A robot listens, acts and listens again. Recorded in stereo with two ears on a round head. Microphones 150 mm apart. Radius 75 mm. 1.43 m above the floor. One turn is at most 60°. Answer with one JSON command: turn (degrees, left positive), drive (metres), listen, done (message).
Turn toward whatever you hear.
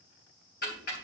{"turn": 60}
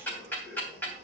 {"turn": 10}
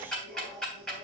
{"done": "Facing the ticking, 2 to 4 m away."}